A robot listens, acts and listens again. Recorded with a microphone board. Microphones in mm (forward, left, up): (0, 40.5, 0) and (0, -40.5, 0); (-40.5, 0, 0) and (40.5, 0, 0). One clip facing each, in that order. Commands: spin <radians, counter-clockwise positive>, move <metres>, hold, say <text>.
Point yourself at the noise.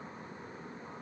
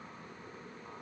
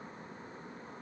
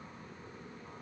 hold
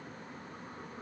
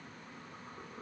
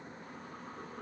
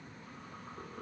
hold
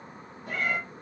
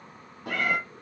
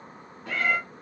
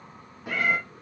spin -1.40
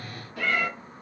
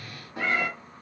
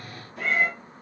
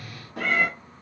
spin -0.44
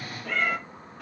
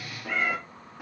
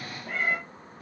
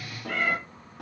spin -0.17
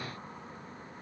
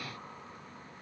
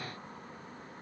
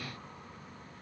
hold
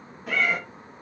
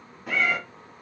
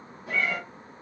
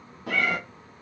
say Found it: a cat meowing, straight ahead, under 1 m away.